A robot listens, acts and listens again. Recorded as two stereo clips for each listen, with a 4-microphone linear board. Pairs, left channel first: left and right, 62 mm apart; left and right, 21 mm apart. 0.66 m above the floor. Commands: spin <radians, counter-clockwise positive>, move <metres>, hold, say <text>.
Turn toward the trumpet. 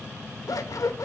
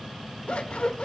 hold
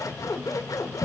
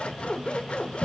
hold
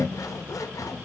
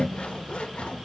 say I can't make out a trumpet, only scissors.